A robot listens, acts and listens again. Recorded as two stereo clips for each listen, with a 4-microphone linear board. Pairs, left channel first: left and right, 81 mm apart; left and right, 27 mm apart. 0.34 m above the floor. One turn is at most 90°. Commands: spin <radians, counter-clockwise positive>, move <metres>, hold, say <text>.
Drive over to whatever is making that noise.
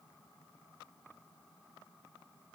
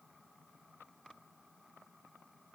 hold
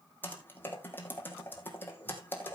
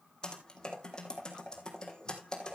spin 0.44
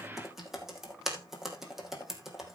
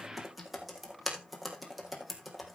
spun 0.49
move 1.0
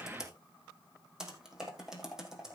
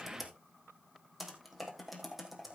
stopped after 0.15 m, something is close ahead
say Something is in my way. I am facing the typing on a keyboard but have not reached it.